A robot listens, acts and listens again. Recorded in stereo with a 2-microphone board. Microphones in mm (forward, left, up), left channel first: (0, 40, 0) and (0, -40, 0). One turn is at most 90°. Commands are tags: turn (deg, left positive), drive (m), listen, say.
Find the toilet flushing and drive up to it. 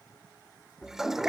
<turn deg="-30"/>
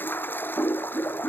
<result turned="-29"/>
<turn deg="25"/>
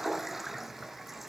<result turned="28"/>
<drive m="1.0"/>
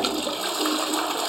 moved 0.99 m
<drive m="1.0"/>
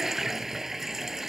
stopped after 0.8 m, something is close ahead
<say>Arrived at the toilet flushing, straight ahead.</say>